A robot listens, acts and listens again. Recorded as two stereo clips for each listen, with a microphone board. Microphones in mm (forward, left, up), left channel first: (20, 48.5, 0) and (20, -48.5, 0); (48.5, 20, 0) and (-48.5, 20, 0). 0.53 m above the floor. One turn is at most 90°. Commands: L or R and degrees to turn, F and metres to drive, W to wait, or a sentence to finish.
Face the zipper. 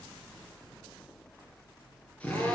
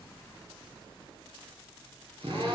W
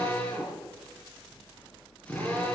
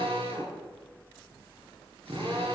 W
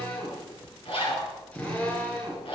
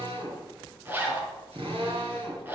L90
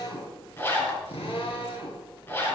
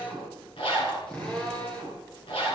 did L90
L25
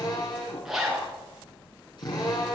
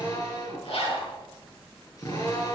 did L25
Facing the zipper, over 4 m away.